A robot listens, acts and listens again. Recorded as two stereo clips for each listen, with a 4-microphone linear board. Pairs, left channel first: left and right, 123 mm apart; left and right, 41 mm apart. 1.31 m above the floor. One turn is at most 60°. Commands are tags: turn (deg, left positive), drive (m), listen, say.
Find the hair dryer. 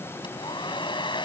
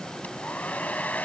<turn deg="40"/>
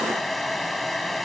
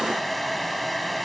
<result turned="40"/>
<say>Facing the hair dryer.</say>